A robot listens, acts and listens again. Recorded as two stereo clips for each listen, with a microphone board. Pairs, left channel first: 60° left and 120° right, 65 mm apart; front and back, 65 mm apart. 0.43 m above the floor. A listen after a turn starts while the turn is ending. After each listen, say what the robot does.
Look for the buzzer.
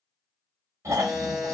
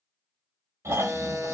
Turn 150° left.
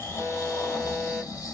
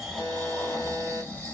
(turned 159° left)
Facing the buzzer.